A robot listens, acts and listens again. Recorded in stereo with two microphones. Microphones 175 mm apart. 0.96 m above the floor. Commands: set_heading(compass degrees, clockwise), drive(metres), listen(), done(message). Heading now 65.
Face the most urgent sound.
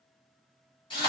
listen()
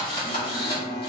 set_heading(335)
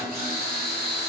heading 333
listen()
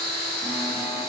listen()
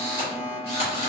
set_heading(348)
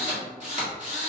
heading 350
listen()
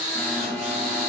done("Facing the alarm, 1 to 2 m away.")